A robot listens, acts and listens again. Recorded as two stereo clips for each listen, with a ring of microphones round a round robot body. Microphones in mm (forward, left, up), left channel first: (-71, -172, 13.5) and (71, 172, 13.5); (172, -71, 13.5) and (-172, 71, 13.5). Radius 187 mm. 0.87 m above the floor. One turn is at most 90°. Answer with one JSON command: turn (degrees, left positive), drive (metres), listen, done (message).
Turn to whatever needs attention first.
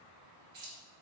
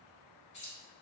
{"listen": true}
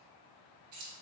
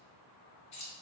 {"listen": true}
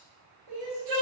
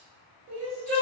{"turn": 90}
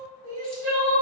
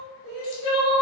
{"turn": 20}
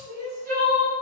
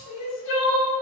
{"done": "Facing the crying."}